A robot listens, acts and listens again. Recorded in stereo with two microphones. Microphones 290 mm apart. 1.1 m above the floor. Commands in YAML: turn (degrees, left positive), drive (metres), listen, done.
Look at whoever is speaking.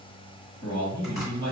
turn: 70
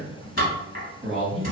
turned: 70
done: "Facing the man speaking, 1 to 2 m away."